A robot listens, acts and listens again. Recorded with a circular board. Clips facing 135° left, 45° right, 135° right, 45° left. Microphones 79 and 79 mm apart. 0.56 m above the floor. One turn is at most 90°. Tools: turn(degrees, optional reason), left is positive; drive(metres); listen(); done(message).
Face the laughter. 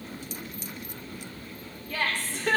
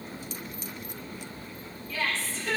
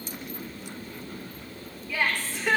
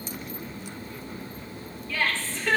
turn(degrees=90, reason="The laughter: 150° left.")
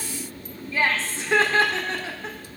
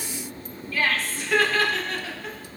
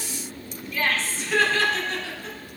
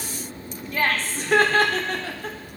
turn(degrees=75, reason="The laughter is now 75° left.")
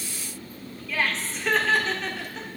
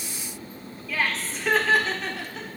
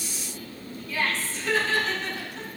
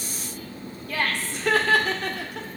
turn(degrees=45, reason="The laughter is now 45° left.")
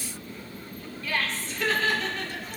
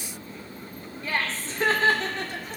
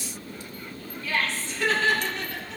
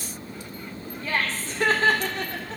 done("Facing the laughter.")